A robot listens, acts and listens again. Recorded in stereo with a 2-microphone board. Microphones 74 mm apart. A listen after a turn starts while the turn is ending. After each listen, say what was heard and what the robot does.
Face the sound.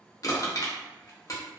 The crushing: about 50° left or 130° left. Turn 50° left.
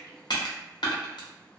So it is at 80° left. Turn 80° left.
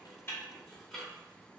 Keep listening.
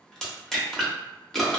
Found it: crushing, straight ahead.